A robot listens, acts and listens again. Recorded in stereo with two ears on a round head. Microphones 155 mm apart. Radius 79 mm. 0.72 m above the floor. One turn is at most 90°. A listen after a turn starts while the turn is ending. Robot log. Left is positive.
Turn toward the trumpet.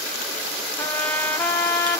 cmd yaw +30
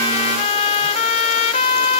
note: So it is at 135° left.
cmd yaw +90
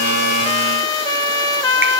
note: The trumpet is now 25° left.
cmd yaw +25
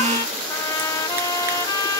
note: The trumpet is now 25° left.
cmd yaw +25
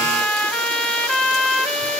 note: The trumpet is now 10° left.
cmd yaw +10
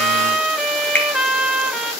end: Found it: a trumpet, straight ahead.